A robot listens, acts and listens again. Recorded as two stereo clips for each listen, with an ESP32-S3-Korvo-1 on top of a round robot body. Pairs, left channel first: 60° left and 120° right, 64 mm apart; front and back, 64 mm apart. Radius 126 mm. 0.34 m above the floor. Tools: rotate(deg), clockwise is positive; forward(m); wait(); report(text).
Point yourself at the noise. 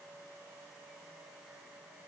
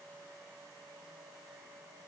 wait()
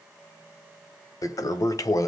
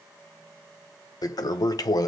rotate(-25)
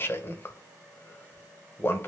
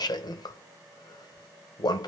report("Found it: a toilet flushing, straight ahead, under 1 m away.")